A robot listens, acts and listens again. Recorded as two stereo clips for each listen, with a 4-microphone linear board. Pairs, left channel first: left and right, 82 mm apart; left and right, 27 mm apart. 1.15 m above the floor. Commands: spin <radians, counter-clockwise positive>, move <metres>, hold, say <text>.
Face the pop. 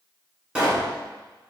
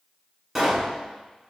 spin -0.52
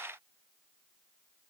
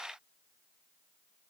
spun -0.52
hold
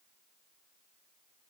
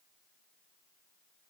say I heard a pop, but can't make it out now. It was about 15° left or 135° right.